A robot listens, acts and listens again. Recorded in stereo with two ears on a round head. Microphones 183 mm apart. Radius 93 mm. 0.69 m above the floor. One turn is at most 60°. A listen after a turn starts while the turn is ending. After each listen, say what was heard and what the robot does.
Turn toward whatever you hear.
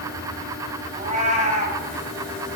The cat meowing: about 35° right or 145° right. Turn 35° right.
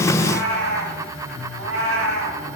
So it is at 105° right. Turn 60° right.
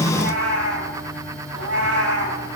The cat meowing is now 60° right. Turn 60° right.
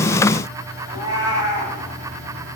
The cat meowing is now 20° right. Turn 20° right.
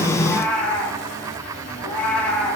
Facing the cat meowing, 2 to 4 m away.